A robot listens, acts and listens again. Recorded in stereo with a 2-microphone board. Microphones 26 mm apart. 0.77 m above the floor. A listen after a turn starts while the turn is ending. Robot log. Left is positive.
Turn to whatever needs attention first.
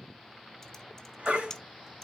note: The baby crying: about 45° right or 135° right.
cmd yaw -45
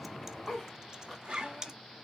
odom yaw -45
cmd idle
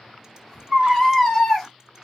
end: Found it: a baby crying, straight ahead, 2 to 4 m away.